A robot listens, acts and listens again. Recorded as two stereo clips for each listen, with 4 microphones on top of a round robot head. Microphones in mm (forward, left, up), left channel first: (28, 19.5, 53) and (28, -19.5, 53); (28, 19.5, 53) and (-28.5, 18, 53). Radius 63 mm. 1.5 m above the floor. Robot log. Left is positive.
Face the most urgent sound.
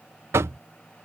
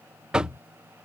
cmd idle
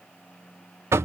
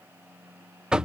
cmd idle
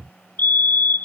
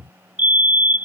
note: The fire alarm: 125° left.
cmd yaw +125
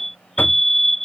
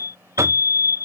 end: Facing the fire alarm.